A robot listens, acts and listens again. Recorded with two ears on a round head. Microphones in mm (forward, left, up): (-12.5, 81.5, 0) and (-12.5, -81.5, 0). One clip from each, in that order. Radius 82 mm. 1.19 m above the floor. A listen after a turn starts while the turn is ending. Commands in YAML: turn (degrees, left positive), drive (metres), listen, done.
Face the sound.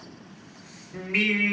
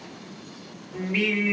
turn: 45
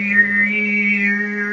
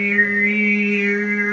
turn: -10
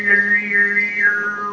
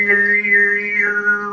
turn: -20
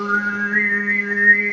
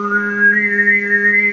turn: -30
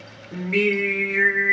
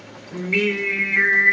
turn: -20
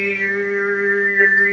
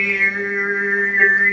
done: "Facing the singing."